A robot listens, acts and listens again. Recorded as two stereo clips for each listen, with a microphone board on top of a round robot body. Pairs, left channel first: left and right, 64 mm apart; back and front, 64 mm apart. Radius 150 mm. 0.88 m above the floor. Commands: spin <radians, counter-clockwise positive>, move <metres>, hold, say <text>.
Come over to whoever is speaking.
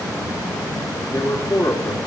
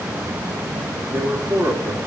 spin 0.79
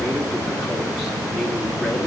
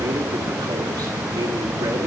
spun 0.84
hold
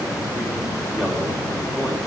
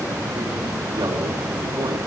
hold
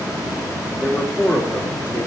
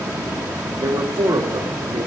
move 1.0
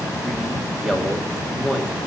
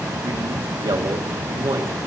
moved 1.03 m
move 1.0
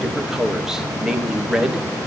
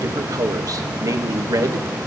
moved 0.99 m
spin -0.17
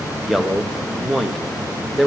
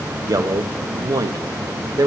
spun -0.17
move 1.0
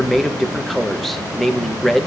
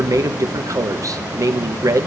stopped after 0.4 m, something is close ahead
say I am next to the man speaking.